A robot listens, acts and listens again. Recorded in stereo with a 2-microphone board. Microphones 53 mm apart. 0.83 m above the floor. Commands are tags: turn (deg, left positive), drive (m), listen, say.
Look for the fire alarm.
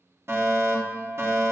<turn deg="-60"/>
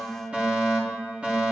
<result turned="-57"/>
<turn deg="-25"/>
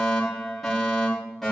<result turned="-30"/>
<say>Found it: a fire alarm, straight ahead, 2 to 4 m away.</say>